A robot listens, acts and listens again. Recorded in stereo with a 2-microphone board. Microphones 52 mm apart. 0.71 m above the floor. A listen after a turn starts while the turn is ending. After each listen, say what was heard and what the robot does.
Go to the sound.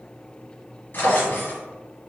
The drawer: about 50° left or 130° left. Turn 50° left.
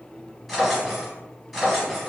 Drive 1.0 m forward.
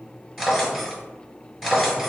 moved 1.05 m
Drive 1.0 m forward.
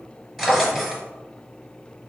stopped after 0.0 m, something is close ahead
Arrived at the drawer, straight ahead.